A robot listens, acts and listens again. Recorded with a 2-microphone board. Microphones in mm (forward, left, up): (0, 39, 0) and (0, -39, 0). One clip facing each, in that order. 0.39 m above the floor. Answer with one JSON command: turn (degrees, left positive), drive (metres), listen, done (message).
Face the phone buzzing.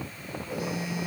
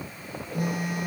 {"turn": -60}
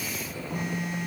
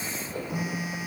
{"done": "Found it: a phone buzzing, straight ahead, 2 to 4 m away."}